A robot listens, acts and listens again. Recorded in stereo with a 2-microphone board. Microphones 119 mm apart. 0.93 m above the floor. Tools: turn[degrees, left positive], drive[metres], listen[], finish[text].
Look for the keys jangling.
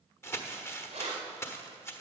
Thought: The keys jangling: about 60° right or 120° right.
Action: turn[-60]
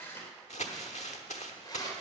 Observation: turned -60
Thought: So it is at 35° left.
Action: turn[35]
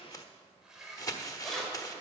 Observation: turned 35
Action: finish[Facing the keys jangling.]